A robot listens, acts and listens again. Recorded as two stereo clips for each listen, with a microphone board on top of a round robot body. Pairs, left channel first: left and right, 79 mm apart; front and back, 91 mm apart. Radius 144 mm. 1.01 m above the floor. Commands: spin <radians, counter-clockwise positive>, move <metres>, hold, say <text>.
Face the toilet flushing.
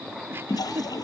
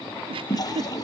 spin 0.87
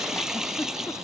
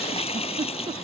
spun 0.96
say Found it: a toilet flushing, straight ahead.